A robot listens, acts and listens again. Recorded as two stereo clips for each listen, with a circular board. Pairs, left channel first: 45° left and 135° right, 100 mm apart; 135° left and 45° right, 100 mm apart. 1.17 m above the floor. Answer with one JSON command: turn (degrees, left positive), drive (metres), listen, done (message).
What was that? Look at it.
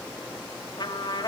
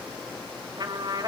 {"done": "Found it: a trumpet, straight ahead, 2 to 4 m away."}